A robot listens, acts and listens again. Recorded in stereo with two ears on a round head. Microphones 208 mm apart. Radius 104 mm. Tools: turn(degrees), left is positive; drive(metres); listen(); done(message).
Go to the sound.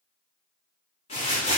turn(degrees=30)
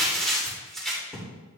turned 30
drive(metres=1.0)
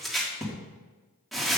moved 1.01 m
drive(metres=1.0)
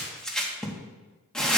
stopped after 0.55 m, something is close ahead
done("I am next to the crumpling.")